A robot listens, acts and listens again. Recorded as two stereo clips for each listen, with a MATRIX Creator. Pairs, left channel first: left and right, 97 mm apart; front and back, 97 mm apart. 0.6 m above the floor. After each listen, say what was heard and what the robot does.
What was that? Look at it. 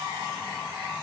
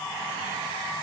Keep listening.
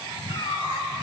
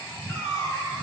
The cat meowing: 50° left. Turn 50° left.
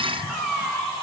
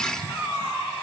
Found it: a cat meowing, straight ahead, 1 to 2 m away.